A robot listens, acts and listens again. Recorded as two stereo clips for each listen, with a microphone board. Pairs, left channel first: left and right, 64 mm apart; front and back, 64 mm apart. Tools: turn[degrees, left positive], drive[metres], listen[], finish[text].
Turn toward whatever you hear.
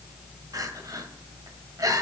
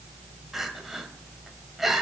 Thought: The crying: 95° right.
Action: turn[-95]
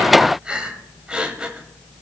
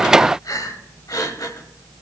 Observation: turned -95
Thought: The crying is now 15° right.
Action: turn[-15]
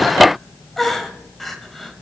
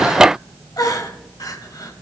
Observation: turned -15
Action: finish[Found it: crying, straight ahead.]